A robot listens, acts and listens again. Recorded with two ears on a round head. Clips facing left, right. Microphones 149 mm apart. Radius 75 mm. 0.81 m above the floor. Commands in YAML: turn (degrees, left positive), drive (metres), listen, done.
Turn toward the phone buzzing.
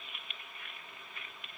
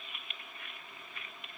listen: true
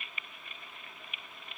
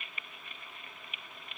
listen: true
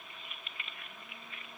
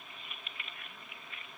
done: "I can't make out a phone buzzing to turn to."